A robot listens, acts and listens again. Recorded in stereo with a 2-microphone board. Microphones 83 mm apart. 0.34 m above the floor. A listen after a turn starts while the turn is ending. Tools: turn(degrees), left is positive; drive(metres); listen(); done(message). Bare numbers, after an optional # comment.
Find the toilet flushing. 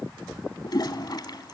# The toilet flushing: about 55° left or 125° left.
turn(55)
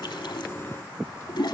# So it is at 65° left.
turn(65)
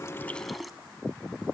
done("Found it: a toilet flushing, straight ahead, under 1 m away.")